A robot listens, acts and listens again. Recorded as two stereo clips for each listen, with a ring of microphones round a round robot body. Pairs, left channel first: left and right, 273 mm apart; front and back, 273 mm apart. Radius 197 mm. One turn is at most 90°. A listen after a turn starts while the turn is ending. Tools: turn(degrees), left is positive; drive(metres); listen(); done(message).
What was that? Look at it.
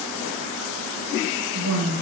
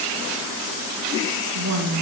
turn(degrees=-90)
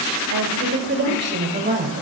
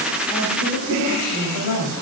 turn(degrees=-30)
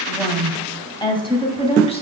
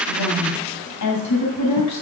turn(degrees=20)
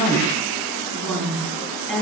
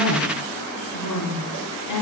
done("Found it: a woman speaking, straight ahead, 2 to 4 m away.")